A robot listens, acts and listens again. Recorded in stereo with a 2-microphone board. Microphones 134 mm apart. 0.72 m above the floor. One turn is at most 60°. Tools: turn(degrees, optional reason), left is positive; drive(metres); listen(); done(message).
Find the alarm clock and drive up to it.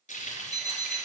turn(degrees=-30, reason="The alarm clock: about 30° right or 150° right.")
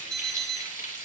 drive(metres=1.0)
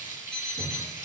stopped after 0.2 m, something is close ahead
done("Blocked. The alarm clock is further on, straight ahead.")